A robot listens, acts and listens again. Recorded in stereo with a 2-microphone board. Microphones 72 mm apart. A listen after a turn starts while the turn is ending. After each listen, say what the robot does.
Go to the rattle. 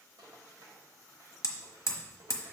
Turn 90° right.
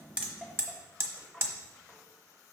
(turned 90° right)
Turn 10° right.
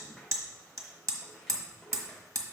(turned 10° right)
Keep listening.
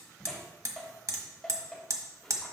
Drive 1.0 m forward.
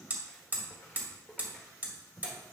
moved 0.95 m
Drive 1.0 m forward.
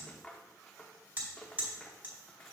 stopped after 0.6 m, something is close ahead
Turn 10° left.
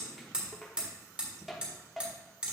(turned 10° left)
Arrived at the rattle, straight ahead.